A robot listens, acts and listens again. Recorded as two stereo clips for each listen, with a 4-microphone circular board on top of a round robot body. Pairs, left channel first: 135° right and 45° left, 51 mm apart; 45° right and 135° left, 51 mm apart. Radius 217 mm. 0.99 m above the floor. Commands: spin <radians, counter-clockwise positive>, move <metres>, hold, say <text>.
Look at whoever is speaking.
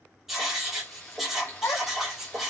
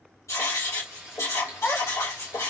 spin -1.83
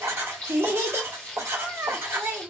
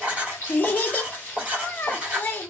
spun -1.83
say Facing the child speaking, 1 to 2 m away.